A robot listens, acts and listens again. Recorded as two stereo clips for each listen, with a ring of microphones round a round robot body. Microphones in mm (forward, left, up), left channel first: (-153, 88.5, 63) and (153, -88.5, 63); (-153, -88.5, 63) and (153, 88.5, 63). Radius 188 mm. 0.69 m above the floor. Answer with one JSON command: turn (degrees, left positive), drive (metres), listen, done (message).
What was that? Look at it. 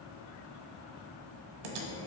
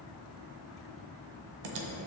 {"turn": -10}
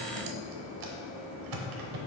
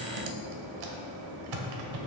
{"done": "Found it: typing on a keyboard, straight ahead, under 1 m away."}